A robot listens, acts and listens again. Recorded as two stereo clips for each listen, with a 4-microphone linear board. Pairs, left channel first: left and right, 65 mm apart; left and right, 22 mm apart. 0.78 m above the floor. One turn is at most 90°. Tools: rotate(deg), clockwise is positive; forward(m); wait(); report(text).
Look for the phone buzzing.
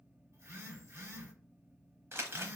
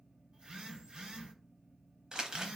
rotate(45)
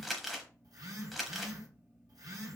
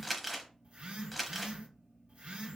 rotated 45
rotate(90)
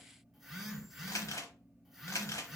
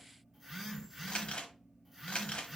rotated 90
report("Found it: a phone buzzing, straight ahead.")